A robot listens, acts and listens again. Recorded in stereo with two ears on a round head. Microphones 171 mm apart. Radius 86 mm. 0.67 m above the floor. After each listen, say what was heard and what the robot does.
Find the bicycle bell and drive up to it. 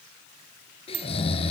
Turn 90° right.
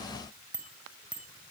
Drive 1.0 m forward.
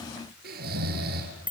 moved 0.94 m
The bicycle bell is now 10° right. Turn 10° right.
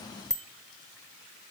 Drive 1.0 m forward.
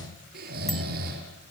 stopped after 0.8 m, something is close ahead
Keep listening.
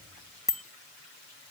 Arrived at the bicycle bell, straight ahead.